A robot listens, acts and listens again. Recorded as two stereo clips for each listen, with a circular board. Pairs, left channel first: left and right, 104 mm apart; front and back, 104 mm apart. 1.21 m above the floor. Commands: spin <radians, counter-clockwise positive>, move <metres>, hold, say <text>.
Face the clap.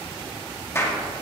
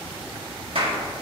spin 2.71
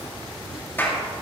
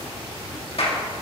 spin 0.35
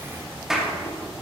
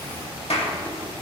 say Facing the clap.